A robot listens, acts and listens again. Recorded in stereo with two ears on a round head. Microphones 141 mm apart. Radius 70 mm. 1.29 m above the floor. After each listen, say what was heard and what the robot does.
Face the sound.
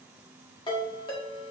The ringtone: about 30° left or 150° left. Turn 30° left.
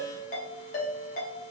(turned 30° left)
So it is at 115° left. Turn 115° left.
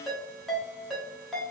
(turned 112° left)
Found it: a ringtone, straight ahead, 1 to 2 m away.